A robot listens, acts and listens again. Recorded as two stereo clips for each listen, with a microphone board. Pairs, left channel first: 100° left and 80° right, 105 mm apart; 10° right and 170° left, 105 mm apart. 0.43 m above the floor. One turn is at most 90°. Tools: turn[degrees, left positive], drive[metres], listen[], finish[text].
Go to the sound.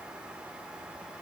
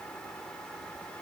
Action: listen[]
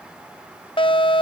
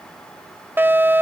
Thought: The fire alarm: 105° left.
Action: turn[90]
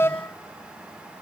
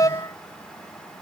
Thought: The fire alarm is now 40° left.
Action: turn[40]
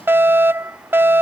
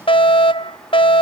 Thought: The fire alarm is now 15° right.
Action: turn[-15]
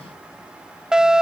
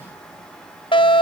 Action: drive[1.0]
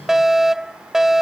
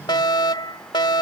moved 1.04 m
Action: drive[1.0]
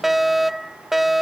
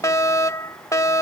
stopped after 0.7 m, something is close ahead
Action: finish[Arrived at the fire alarm, straight ahead.]